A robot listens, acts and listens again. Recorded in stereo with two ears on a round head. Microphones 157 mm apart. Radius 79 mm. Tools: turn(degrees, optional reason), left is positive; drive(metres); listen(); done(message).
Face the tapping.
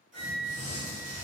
listen()
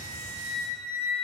listen()
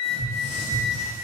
turn(degrees=-65, reason="The tapping: about 65° right or 115° right.")
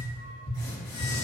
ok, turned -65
turn(degrees=-50, reason="So it is at 50° right.")
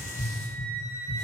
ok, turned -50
done("Facing the tapping.")